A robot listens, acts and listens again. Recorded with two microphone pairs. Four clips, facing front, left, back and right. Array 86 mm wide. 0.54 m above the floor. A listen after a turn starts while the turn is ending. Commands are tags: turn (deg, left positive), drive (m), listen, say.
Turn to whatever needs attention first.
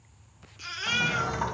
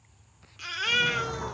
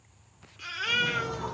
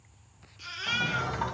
<turn deg="105"/>
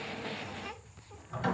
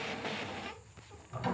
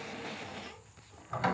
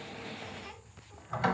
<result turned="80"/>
<turn deg="25"/>
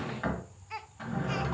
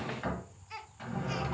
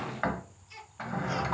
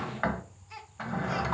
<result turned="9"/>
<turn deg="15"/>
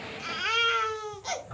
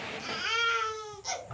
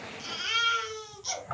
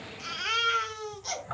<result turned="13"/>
<say>Facing the baby crying, under 1 m away.</say>